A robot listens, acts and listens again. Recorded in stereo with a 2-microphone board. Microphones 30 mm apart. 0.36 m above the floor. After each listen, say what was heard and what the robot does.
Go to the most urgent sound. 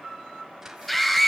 Turn 30° left.
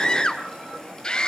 So it is at 140° left. Turn 140° left.
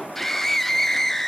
The scream is now 15° left. Turn 15° left.
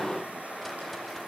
Keep listening.
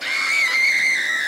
Drive 1.0 m forward.
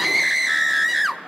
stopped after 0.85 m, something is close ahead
I am next to the scream.